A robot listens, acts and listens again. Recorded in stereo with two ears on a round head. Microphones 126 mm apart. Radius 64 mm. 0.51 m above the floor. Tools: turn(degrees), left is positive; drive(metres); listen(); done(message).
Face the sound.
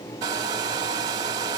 turn(degrees=-30)
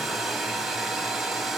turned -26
done("Facing the hair dryer.")